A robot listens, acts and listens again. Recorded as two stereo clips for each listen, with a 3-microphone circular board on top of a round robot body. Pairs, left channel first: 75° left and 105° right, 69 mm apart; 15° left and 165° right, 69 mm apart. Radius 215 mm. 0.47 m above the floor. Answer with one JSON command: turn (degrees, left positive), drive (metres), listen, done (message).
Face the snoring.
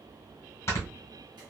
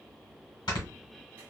{"turn": 25}
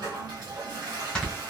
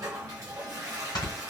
{"done": "Facing the snoring."}